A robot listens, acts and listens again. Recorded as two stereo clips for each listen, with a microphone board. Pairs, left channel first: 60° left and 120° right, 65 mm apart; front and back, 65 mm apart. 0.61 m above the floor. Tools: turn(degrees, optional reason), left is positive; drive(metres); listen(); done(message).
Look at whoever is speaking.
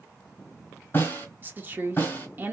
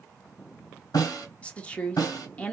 turn(degrees=-65, reason="The woman speaking: 65° right.")
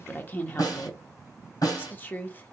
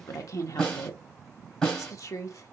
done("Found it: a woman speaking, straight ahead, 1 to 2 m away.")